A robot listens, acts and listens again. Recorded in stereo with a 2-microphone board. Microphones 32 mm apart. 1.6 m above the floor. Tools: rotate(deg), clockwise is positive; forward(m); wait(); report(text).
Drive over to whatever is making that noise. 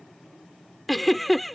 rotate(-30)
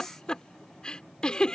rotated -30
rotate(-150)
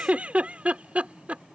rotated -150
rotate(45)
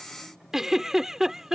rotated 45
rotate(15)
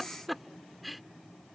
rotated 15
forward(1.0)
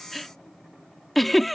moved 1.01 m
forward(1.0)
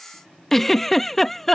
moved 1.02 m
rotate(-10)
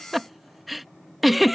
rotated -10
forward(1.0)
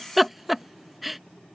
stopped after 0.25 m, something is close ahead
report("I am next to the giggle.")